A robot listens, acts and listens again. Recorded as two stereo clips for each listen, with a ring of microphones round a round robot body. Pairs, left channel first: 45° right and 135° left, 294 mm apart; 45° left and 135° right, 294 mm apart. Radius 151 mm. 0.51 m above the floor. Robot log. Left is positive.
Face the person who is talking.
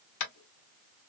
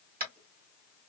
cmd idle
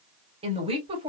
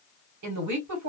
note: The woman speaking: 155° right.
cmd yaw -155
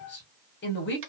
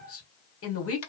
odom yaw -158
end: Found it: a woman speaking, straight ahead, 1 to 2 m away.